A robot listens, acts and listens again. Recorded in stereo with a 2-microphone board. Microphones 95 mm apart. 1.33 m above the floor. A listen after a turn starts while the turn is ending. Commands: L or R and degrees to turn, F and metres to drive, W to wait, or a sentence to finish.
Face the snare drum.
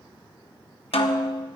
L90
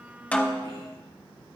Facing the snare drum.